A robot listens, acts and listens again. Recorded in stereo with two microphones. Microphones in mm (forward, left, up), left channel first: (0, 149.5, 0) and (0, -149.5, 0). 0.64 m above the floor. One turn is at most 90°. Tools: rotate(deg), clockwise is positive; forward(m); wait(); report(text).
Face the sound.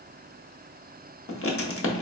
rotate(-45)
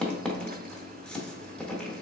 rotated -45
report("Found it: writing, straight ahead, under 1 m away.")